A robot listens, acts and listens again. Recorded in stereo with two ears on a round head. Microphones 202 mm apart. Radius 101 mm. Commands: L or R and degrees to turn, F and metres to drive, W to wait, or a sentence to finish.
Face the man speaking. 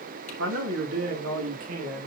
R75
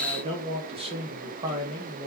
R20
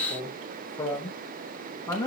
L15
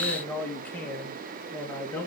Facing the man speaking, 2 to 4 m away.